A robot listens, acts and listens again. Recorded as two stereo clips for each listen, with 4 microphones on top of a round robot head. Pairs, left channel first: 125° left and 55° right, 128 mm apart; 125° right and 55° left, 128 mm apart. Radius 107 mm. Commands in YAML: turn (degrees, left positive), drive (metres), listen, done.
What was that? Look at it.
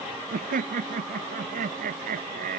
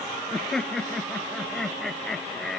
turn: -40
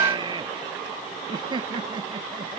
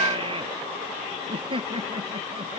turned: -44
done: "Found it: laughter, straight ahead."